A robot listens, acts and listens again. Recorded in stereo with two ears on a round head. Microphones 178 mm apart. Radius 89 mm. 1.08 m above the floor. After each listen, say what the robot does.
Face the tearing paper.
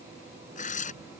Turn 40° left.
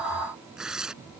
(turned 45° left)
Found it: tearing paper, straight ahead.